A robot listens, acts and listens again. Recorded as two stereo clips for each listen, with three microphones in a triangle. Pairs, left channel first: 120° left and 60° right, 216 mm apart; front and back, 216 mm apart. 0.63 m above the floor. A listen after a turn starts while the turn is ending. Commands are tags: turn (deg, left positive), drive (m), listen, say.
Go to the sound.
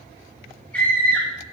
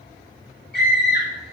<turn deg="35"/>
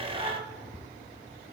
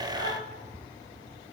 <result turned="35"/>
<listen/>
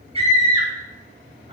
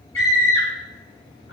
<drive m="1.0"/>
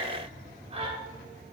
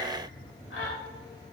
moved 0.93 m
<drive m="1.0"/>
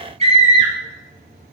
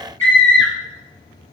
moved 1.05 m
<drive m="1.0"/>
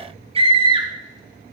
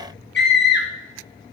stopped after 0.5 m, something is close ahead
<say>I am next to the scream.</say>